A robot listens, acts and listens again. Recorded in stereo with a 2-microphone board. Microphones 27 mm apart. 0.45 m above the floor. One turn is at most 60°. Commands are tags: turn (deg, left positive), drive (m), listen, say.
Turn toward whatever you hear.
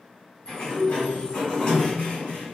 <turn deg="30"/>
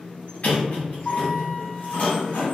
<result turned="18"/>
<turn deg="60"/>
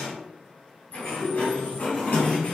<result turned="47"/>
<turn deg="60"/>
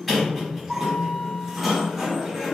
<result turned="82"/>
<say>Found it: a sliding door, straight ahead, 1 to 2 m away.</say>